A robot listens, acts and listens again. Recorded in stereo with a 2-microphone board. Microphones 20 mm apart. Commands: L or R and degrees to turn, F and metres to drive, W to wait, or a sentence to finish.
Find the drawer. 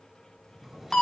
R30
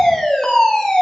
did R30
W
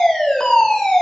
W
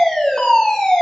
I heard a drawer, but can't make it out now. It was about 25° left or 145° right.